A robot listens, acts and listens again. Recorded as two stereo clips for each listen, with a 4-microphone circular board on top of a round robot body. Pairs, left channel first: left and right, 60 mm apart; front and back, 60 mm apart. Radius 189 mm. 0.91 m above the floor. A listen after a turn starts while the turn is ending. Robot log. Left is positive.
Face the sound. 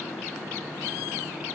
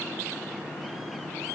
cmd idle
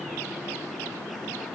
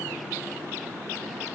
cmd idle
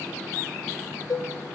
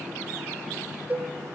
note: The cowbell: 115° left.
cmd yaw +115
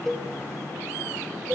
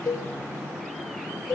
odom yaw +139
note: The cowbell is now 25° right.
cmd yaw -25
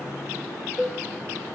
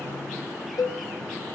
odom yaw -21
end: Found it: a cowbell, straight ahead, under 1 m away.